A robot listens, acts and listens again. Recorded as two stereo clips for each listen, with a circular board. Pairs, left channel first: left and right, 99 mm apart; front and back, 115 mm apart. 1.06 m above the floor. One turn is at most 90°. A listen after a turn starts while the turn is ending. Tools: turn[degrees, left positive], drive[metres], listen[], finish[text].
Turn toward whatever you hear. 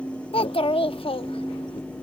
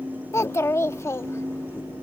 Thought: The child speaking: 65° left.
Action: turn[65]
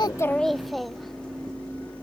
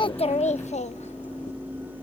Action: finish[Facing the child speaking.]